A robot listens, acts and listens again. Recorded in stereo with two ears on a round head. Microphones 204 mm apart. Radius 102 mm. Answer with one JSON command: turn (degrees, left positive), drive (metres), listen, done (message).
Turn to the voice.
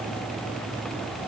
{"listen": true}
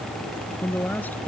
{"turn": 30}
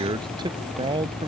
{"turn": -20}
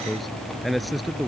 {"done": "Found it: a man speaking, straight ahead."}